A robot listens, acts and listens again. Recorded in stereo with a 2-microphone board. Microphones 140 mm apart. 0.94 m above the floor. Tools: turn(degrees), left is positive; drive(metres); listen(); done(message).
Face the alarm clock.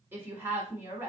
listen()
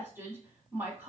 listen()
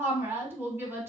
done("I can't make out an alarm clock to turn to.")